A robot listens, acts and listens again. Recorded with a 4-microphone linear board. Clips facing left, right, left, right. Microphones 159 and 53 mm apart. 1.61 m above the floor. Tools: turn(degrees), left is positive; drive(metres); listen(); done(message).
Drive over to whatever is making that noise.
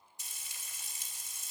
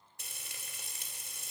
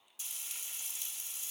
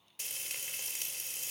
turn(degrees=-55)
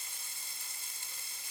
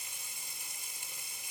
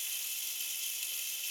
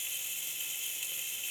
turn(degrees=-15)
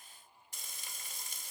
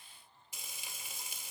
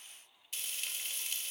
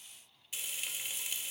drive(metres=1.0)
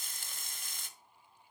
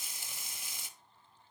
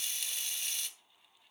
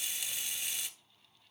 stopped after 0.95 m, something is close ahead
turn(degrees=-10)
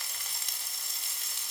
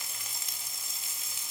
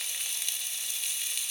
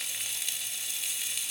done("I am next to the frying.")